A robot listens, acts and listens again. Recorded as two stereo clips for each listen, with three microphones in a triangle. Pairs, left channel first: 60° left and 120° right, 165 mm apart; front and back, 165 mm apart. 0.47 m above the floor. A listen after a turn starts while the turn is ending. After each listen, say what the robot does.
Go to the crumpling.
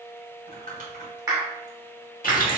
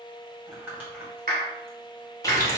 Turn 100° right.
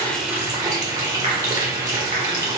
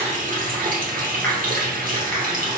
Keep listening.
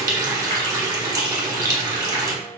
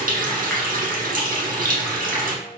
Keep listening.
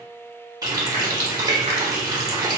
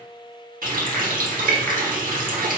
Facing where the crumpling came from. I can't hear it now. I did not reach it.